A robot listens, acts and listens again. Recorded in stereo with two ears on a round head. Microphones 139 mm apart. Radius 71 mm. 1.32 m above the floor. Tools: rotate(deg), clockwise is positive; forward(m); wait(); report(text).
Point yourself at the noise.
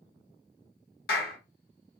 rotate(-70)
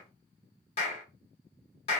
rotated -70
rotate(-35)
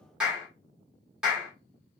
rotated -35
report("Facing the clap.")